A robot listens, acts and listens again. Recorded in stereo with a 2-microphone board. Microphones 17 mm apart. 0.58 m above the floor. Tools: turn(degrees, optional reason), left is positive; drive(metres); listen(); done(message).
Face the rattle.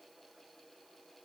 listen()
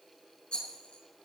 turn(degrees=70, reason="The rattle: about 70° left or 110° left.")
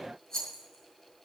turn(degrees=35, reason="So it is at 35° left.")
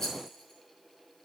turn(degrees=25, reason="The rattle is now 25° left.")
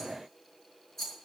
turn(degrees=20, reason="The rattle is now 20° left.")
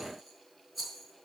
done("Facing the rattle.")